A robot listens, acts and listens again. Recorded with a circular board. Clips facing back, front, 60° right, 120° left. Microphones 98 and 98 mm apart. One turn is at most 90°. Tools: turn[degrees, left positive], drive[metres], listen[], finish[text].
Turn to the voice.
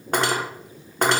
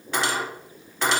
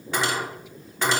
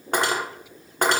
Action: listen[]
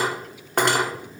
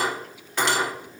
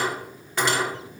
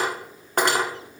Action: listen[]
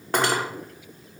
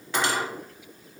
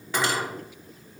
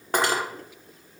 Action: finish[I can't make out anyone speaking, only cutlery clinking.]